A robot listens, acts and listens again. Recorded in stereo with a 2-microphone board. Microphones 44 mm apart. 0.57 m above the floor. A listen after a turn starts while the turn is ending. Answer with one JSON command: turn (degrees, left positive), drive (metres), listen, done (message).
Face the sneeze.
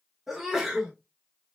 {"turn": -30}
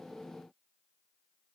{"listen": true}
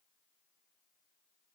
{"done": "I heard a sneeze, but can't make it out now. It was about 20° left or 140° right."}